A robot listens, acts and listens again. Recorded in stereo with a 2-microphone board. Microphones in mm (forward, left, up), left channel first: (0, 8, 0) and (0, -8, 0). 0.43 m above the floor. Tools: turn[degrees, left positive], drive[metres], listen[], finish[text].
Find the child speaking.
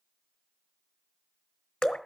Action: listen[]
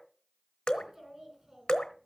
Thought: The child speaking: about 30° right or 150° right.
Action: turn[-30]
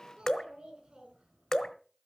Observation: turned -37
Thought: So it is at 110° right.
Action: turn[-110]
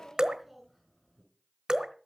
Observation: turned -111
Action: finish[Facing the child speaking, over 4 m away.]